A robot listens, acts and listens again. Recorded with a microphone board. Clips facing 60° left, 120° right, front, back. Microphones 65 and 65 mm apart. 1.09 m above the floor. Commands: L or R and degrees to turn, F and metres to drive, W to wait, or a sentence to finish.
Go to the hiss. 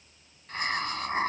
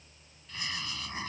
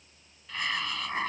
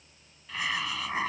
L95
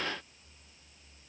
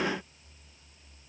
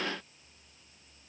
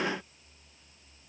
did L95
W
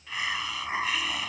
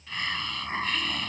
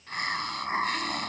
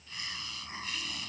R20
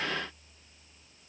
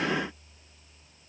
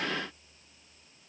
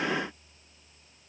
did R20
W
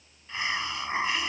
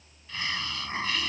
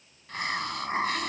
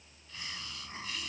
F1.0
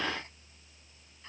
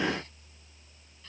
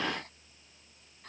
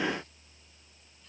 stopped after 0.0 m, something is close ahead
W
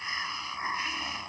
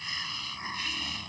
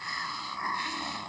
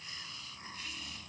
Blocked. The hiss is further on, straight ahead.